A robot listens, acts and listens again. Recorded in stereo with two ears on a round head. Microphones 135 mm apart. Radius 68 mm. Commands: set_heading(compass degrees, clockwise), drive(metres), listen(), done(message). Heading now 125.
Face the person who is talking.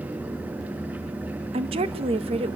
set_heading(165)
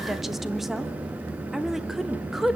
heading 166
done("Found it: a woman speaking, straight ahead.")